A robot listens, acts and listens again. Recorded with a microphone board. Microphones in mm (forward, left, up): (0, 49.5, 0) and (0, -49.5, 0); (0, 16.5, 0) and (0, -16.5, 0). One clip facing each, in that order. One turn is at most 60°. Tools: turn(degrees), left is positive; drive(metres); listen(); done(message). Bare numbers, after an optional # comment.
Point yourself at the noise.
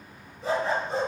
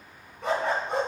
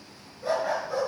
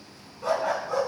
# The dog barking: about 65° right or 115° right.
turn(-60)
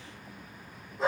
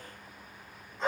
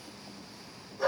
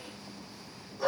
done("Facing the dog barking.")